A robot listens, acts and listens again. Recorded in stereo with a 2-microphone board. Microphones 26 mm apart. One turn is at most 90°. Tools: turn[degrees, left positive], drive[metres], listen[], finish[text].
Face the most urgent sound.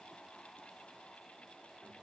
Action: listen[]
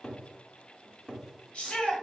Thought: The shout: about 50° left or 130° left.
Action: turn[50]
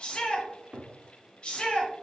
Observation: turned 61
Thought: So it is at 55° left.
Action: turn[55]
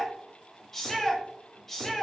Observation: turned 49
Thought: The shout is now 10° left.
Action: turn[10]
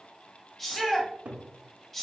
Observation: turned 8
Action: finish[Found it: a shout, straight ahead.]